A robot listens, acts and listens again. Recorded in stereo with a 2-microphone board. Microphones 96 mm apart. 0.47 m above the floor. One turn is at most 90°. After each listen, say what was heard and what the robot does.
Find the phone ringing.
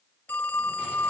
The phone ringing: about 20° left or 160° left. Turn 20° left.
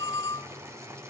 So it is at 140° left. Turn 90° left.
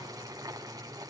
Nothing new. It was at 50° left. Turn 50° left.
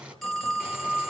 Facing the phone ringing, 1 to 2 m away.